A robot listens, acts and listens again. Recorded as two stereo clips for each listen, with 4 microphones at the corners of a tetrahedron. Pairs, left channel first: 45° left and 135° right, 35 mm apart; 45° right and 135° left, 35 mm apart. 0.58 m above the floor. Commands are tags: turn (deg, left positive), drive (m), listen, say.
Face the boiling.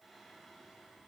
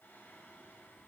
<listen/>
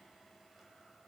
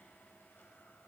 <listen/>
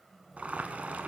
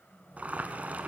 <turn deg="180"/>
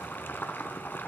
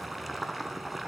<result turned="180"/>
<turn deg="45"/>
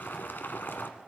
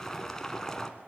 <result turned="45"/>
<turn deg="25"/>
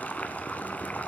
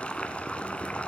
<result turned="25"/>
<say>Found it: boiling, straight ahead, 1 to 2 m away.</say>